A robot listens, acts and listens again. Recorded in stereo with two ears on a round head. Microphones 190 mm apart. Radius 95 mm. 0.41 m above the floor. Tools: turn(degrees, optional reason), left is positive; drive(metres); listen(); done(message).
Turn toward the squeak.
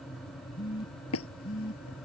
turn(degrees=70, reason="The squeak: about 70° left or 110° left.")
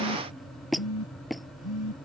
done("Facing the squeak.")